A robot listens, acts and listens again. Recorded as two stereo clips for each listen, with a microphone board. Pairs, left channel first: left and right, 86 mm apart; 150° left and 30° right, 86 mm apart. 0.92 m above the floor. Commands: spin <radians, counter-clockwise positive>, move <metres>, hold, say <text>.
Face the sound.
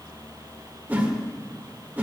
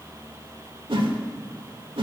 spin -0.35
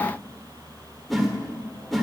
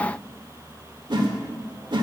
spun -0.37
say Facing the whoosh, 1 to 2 m away.